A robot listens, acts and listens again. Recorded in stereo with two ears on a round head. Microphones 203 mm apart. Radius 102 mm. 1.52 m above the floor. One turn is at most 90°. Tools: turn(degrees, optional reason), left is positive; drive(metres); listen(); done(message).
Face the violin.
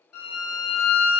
turn(degrees=70, reason="The violin: about 70° left or 110° left.")
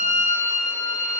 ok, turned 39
turn(degrees=70, reason="So it is at 70° left.")
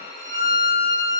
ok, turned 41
turn(degrees=25, reason="The violin is now 25° left.")
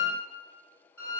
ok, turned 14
turn(degrees=15, reason="The violin is now 15° left.")
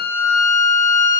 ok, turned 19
done("Facing the violin.")